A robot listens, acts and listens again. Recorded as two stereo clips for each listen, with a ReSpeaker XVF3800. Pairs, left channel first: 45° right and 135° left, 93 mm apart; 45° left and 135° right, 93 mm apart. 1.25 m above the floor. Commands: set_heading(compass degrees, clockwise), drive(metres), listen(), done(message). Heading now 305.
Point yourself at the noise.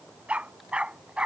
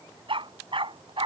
set_heading(90)
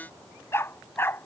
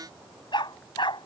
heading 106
set_heading(86)
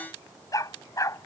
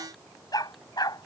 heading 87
done("Found it: a dog barking, straight ahead.")